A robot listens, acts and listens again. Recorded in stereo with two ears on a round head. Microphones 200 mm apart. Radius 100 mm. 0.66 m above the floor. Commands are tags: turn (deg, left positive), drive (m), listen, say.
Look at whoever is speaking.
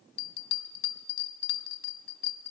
<listen/>
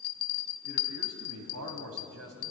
<turn deg="-75"/>
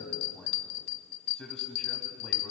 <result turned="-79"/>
<say>Facing the man speaking, 2 to 4 m away.</say>